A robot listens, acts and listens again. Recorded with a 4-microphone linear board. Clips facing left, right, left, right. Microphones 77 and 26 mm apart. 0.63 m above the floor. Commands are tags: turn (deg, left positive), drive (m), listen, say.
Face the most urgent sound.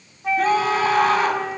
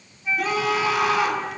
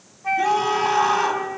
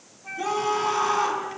<turn deg="40"/>
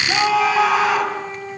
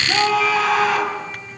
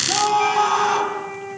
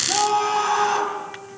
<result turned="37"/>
<say>Found it: a scream, straight ahead.</say>